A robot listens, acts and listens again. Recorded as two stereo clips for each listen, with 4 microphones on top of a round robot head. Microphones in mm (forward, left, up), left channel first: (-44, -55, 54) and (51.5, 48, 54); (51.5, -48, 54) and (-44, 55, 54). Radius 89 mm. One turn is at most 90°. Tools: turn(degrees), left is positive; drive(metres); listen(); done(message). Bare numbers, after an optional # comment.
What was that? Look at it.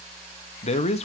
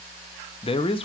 # The man speaking: 95° right.
turn(-90)
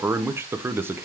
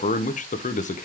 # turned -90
# The man speaking is now 25° right.
turn(-25)
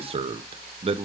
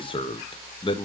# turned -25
done("Facing the man speaking.")